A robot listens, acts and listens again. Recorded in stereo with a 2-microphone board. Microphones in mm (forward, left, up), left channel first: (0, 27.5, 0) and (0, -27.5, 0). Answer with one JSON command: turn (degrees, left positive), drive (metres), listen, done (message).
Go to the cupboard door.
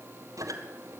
{"listen": true}
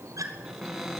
{"turn": 30}
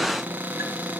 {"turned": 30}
{"turn": -30}
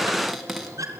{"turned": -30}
{"drive": 1.0}
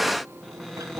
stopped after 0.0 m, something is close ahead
{"done": "Blocked. The cupboard door is further on, straight ahead."}